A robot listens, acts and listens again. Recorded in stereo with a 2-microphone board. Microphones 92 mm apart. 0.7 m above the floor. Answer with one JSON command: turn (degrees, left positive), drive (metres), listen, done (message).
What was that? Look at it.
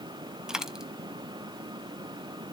{"turn": -30}
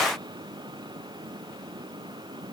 {"listen": true}
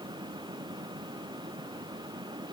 {"done": "I heard a dropped coin, but can't make it out now. It was about 20° left or 140° right."}